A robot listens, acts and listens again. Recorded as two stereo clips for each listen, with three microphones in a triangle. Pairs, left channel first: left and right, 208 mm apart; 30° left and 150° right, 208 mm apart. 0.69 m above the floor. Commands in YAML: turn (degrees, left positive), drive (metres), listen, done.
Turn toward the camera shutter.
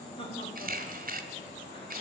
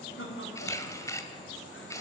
turn: -45
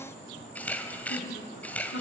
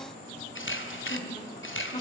turn: 10
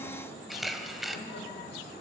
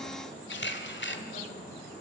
done: "Found it: a camera shutter, straight ahead."